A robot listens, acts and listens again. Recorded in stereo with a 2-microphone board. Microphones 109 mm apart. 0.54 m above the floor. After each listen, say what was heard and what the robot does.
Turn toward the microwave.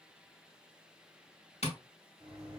The microwave: about 45° right or 135° right. Turn 45° right.
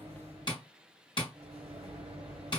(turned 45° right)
So it is at 90° right. Turn 90° right.
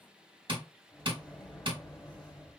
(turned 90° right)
The microwave is now 10° left. Turn 10° left.
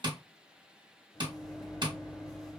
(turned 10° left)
Found it: a microwave, straight ahead.